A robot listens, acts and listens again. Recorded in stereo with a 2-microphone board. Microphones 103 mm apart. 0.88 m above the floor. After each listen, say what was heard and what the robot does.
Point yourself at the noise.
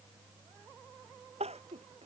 Turn 90° right.
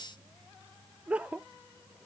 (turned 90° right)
So it is at 10° right. Turn 10° right.
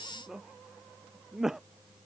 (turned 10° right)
Facing the crying.